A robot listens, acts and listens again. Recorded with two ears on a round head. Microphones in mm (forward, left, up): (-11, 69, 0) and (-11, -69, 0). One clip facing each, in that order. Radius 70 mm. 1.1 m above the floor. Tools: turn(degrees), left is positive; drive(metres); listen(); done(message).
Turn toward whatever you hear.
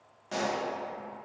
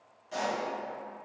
turn(degrees=70)
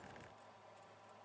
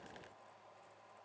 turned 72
listen()
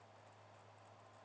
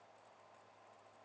done("I heard a pop, but can't make it out now. It was about straight ahead or 35° left.")